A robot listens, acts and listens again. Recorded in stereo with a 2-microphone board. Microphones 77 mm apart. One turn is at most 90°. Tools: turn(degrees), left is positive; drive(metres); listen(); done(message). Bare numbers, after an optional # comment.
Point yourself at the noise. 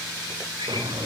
turn(-90)
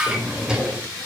# So it is at 10° right.
turn(-10)
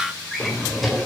done("Facing the drawer.")